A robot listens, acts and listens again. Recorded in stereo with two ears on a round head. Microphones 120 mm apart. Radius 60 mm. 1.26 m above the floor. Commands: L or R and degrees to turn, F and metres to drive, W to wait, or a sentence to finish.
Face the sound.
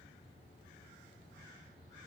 W
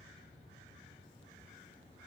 W
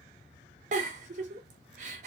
R60
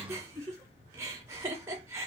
R25
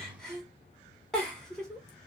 Found it: a giggle, straight ahead.